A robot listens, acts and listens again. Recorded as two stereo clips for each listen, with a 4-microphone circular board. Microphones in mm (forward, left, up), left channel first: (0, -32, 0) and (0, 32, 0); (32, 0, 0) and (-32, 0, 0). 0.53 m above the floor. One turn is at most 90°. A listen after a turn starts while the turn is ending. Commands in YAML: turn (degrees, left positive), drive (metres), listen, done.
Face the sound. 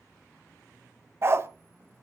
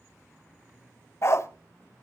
turn: 40
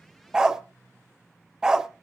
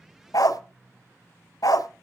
turn: 10
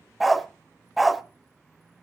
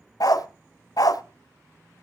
done: "Found it: a dog barking, straight ahead, under 1 m away."